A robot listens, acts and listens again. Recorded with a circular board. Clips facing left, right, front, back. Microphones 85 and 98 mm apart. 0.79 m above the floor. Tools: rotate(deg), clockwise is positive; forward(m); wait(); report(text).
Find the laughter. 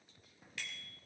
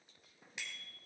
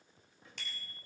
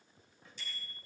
wait()
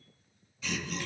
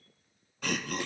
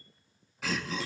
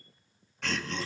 rotate(85)
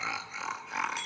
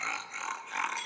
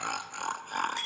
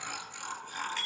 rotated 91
report("Found it: laughter, straight ahead, 1 to 2 m away.")